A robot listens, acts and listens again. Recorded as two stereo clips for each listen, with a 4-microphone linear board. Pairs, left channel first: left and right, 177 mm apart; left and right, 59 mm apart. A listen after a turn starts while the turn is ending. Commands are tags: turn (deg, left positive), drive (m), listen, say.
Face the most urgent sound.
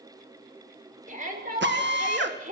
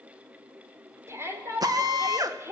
<turn deg="-45"/>
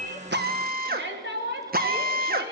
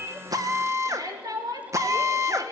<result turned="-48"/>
<turn deg="-90"/>
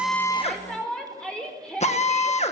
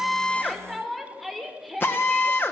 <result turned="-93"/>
<say>Facing the shout, over 4 m away.</say>